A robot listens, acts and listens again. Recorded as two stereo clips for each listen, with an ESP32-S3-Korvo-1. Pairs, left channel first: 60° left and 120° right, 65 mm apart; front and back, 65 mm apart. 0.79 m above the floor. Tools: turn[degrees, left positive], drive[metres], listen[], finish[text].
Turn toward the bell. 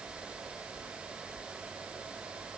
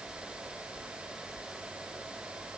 Action: listen[]
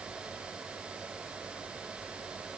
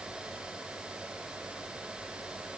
Action: listen[]
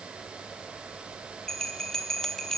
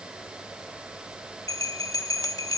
Thought: The bell: 20° right.
Action: turn[-20]
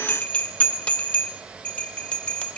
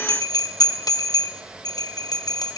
Thought: The bell is now 10° right.
Action: turn[-10]
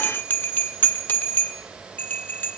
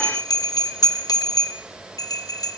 Action: finish[Found it: a bell, straight ahead, under 1 m away.]